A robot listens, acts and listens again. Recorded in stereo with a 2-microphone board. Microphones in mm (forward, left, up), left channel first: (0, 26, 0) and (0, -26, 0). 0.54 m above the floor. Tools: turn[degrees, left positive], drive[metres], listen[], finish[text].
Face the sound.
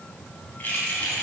Thought: The keys jangling: about 25° left or 155° left.
Action: turn[25]
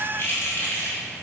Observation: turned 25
Thought: The keys jangling: about 40° left or 140° left.
Action: turn[40]
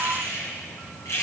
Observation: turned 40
Thought: So it is at 120° left.
Action: turn[120]
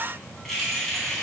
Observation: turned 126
Action: finish[Facing the keys jangling.]